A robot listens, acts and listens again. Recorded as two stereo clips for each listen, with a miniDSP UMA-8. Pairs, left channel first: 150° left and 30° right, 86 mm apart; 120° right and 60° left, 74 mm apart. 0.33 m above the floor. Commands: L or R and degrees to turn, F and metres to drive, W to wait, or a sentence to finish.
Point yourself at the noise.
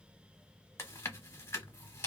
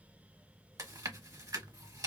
L95
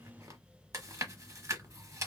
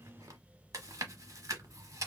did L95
L20
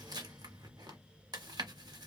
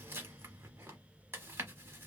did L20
Facing the chewing, under 1 m away.